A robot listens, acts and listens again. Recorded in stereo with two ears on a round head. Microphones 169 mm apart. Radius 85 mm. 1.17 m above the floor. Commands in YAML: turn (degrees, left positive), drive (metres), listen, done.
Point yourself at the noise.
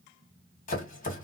turn: 45
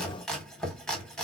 done: "Facing the chopping, 1 to 2 m away."